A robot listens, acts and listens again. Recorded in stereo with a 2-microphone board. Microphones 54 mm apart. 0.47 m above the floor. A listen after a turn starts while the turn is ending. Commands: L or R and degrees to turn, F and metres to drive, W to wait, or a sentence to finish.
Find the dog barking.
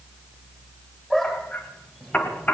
L30
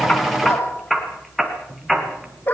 L140
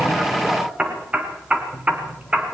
R15
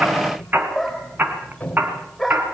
Facing the dog barking.